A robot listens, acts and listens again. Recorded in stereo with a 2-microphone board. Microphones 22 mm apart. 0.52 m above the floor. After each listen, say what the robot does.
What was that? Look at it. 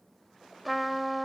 Turn 30° left.
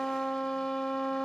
Turn 150° left.
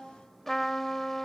Turn 15° left.
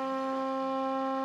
Facing the trumpet.